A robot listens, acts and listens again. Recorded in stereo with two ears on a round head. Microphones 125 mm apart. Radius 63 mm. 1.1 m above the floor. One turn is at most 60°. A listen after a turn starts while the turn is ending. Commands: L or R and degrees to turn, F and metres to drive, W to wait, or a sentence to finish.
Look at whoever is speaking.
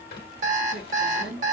R60
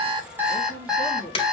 R45
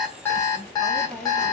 Facing the woman speaking.